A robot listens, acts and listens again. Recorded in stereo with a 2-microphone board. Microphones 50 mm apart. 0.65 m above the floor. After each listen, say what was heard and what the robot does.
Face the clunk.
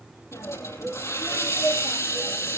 Keep listening.
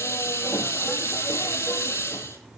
Keep listening.
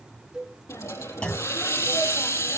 The clunk: about 25° left or 155° left. Turn 25° left.
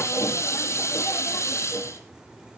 Keep listening.
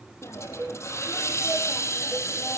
I heard a clunk, but can't make it out now. It was about straight ahead or 130° left.